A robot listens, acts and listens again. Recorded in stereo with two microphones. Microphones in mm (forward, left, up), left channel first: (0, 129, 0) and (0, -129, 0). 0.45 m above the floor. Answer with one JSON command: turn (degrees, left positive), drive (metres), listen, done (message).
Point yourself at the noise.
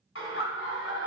{"turn": 50}
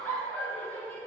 {"done": "Found it: laughter, straight ahead."}